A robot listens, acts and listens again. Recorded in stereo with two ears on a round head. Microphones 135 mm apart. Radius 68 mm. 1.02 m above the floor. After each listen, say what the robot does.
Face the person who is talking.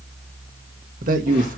Turn 60° right.
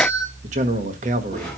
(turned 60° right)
Turn 55° right.
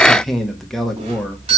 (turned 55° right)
Facing the man speaking.